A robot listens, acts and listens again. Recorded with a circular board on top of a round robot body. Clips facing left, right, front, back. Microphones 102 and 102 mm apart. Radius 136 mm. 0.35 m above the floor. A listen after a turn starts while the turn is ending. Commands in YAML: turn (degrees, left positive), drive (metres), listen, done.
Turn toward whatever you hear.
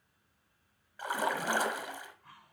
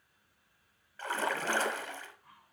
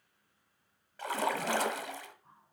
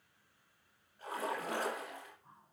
turn: 10
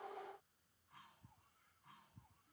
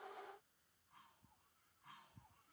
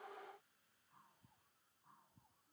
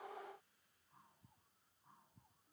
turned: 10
done: "I heard a splash from this way, but can't make it out now."